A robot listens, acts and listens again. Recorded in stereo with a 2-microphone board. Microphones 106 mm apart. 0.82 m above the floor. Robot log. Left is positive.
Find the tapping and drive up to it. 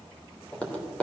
cmd yaw +30
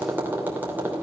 note: So it is at 20° right.
cmd yaw -20
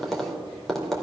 cmd fwd 1.0
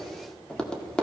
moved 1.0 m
note: The tapping is now 10° left.
cmd yaw +10
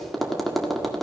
cmd fwd 1.0
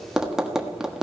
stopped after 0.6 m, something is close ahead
end: Arrived at the tapping, straight ahead.